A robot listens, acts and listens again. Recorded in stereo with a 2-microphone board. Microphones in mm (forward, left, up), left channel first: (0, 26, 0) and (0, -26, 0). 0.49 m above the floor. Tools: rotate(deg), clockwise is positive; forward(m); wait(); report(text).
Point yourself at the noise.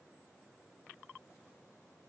wait()
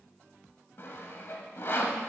rotate(-50)
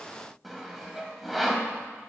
report("Facing the sawing, under 1 m away.")